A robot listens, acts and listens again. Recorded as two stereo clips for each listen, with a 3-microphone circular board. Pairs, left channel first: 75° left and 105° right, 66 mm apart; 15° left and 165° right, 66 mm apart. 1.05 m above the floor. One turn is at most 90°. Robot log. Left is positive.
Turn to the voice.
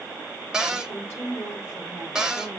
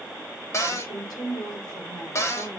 note: The woman speaking: 20° left.
cmd yaw +20
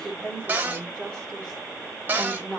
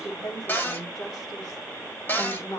end: Facing the woman speaking, 2 to 4 m away.